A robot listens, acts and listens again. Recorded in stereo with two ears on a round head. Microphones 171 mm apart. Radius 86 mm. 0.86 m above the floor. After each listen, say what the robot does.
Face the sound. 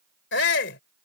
Turn 65° left.
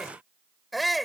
Facing the shout.